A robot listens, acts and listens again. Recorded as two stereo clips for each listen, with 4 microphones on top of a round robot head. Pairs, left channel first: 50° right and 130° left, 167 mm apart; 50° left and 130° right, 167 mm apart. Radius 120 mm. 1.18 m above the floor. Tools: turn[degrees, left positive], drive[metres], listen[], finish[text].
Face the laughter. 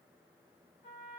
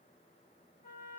Action: listen[]
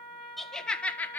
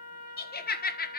Thought: The laughter: 30° left.
Action: turn[30]
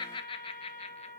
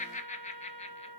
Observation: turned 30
Action: finish[Facing the laughter.]